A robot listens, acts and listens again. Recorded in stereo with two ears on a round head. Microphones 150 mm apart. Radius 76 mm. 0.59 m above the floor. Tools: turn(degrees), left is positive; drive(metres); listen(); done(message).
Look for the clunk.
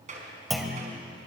turn(degrees=30)
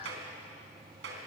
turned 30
listen()
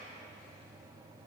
done("I heard a clunk, but can't make it out now. It was about 30° right or 150° left.")